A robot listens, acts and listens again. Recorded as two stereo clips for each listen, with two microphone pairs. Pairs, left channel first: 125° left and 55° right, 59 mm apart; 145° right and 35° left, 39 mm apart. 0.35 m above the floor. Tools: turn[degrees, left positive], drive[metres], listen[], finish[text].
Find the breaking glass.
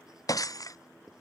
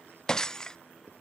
Thought: The breaking glass: 140° left.
Action: turn[140]
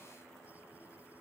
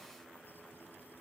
Action: finish[Facing where the breaking glass came from. I can't hear it now.]